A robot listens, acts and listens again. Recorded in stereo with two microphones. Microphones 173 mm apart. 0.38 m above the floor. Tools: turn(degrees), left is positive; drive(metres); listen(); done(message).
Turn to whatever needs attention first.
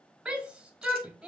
turn(degrees=-30)
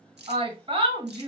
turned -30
turn(degrees=-145)
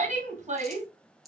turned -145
turn(degrees=-55)
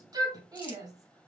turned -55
turn(degrees=-25)
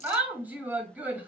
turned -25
turn(degrees=-10)
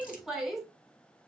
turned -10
done("Found it: a shout, straight ahead.")